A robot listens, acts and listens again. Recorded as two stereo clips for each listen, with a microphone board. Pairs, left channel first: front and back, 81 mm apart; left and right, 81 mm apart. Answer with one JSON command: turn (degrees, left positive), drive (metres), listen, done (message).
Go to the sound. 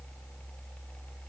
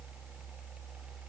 {"listen": true}
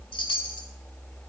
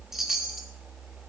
{"drive": 1.0}
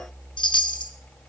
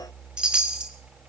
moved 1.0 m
{"turn": -10}
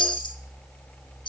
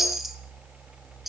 {"drive": 1.0}
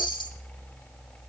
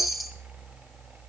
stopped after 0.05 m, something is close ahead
{"done": "I am next to the chime."}